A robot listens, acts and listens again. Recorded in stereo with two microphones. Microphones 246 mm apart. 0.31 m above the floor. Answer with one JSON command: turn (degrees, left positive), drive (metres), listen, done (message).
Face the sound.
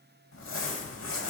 {"turn": 60}
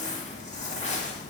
{"turn": 35}
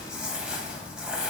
{"done": "Found it: crumpling, straight ahead, under 1 m away."}